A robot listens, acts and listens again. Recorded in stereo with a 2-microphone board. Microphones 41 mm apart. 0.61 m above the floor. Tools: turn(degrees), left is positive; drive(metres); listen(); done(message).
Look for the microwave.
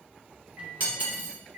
turn(degrees=-35)
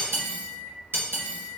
done("Facing the microwave.")